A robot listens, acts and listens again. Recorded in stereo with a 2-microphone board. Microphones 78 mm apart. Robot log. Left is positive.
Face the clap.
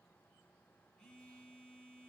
cmd idle
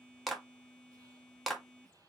cmd yaw +30
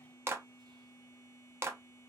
note: So it is at 30° right.
cmd yaw -30
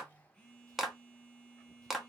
end: Facing the clap.